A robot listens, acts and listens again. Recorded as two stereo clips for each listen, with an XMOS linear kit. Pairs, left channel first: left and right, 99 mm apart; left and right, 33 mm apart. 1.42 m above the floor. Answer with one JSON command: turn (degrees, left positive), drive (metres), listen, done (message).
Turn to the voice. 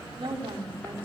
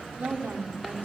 {"turn": -65}
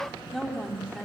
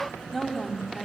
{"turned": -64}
{"done": "Facing the woman speaking, over 4 m away."}